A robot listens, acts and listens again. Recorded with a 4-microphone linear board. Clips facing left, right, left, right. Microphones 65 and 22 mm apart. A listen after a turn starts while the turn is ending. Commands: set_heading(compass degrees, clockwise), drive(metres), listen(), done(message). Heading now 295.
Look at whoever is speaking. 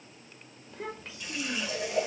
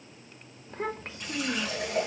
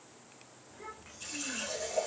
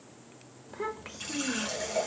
set_heading(340)
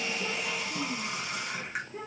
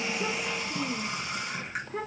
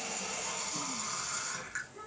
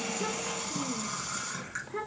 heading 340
set_heading(70)
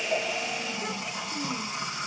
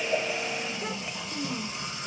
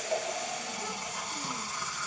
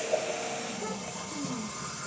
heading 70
listen()
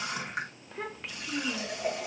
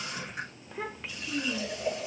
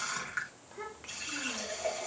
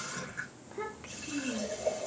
done("Found it: a child speaking, straight ahead.")